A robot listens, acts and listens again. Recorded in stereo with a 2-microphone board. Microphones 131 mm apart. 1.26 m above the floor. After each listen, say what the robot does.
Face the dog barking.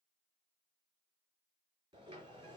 Keep listening.
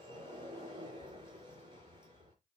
Keep listening.
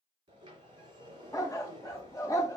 Turn 25° left.
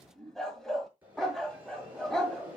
Facing the dog barking.